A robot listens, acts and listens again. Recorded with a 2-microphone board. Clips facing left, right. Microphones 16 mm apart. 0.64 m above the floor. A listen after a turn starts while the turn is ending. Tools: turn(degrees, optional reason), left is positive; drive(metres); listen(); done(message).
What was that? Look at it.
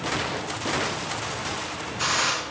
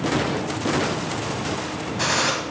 turn(degrees=-40, reason="The gunshot: about 40° right or 140° right.")
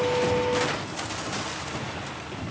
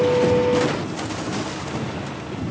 listen()
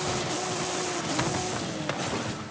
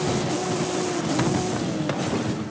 done("I heard a gunshot, but can't make it out now. It was about straight ahead or 100° right.")